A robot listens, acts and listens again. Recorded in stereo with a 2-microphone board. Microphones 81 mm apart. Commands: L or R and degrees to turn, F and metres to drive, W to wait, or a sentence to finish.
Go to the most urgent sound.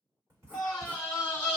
L20
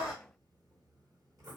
L140
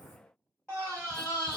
L15
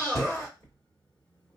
F1.0
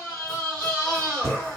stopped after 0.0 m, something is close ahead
Blocked. The scream is further on, straight ahead.